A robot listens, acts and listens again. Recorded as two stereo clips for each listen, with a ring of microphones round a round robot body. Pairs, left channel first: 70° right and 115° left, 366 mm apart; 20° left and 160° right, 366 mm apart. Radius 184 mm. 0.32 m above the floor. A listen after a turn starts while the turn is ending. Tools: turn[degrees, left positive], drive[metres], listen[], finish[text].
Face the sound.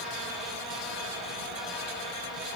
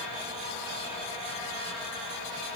Action: listen[]
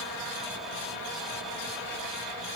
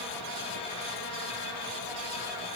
Action: listen[]
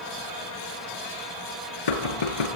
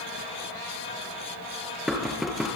Thought: The knocking: 70° right.
Action: turn[-70]
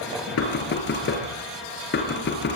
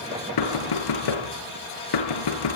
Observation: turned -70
Action: finish[Found it: knocking, straight ahead, 2 to 4 m away.]